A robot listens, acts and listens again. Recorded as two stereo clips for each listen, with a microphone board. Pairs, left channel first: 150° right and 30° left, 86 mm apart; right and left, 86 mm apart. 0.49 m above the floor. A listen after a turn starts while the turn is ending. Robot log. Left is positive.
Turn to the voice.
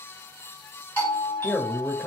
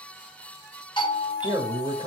note: The man speaking: 115° left.
cmd yaw +115
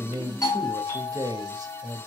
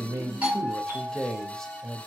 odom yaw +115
note: The man speaking is now 10° right.
cmd yaw -10
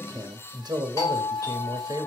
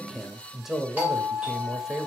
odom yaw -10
end: Found it: a man speaking, straight ahead, 1 to 2 m away.